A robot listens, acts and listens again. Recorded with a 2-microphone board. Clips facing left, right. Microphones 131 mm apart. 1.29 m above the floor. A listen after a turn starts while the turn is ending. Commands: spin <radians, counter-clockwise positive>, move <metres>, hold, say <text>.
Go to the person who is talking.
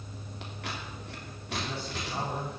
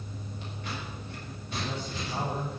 spin 0.52
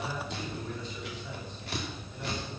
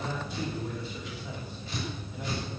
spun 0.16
spin -0.52
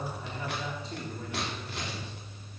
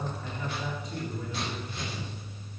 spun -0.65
spin 0.52
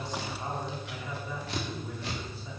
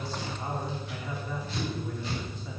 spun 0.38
move 1.0
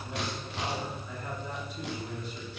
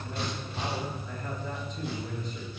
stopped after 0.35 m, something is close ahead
spin 0.17
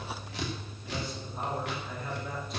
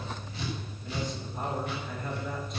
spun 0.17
say Blocked. The man speaking is further on, straight ahead.